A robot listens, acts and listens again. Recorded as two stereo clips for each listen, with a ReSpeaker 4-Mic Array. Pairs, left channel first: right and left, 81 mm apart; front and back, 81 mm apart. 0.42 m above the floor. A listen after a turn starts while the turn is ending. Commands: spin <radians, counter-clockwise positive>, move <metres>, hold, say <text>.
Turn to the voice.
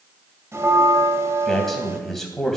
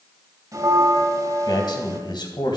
say Facing the man speaking, 2 to 4 m away.